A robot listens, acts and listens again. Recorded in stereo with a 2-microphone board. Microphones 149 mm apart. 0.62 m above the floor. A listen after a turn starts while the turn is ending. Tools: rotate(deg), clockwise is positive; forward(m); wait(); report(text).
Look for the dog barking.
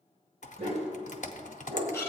rotate(40)
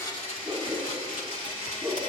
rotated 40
rotate(-15)
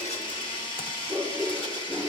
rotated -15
report("Found it: a dog barking, straight ahead.")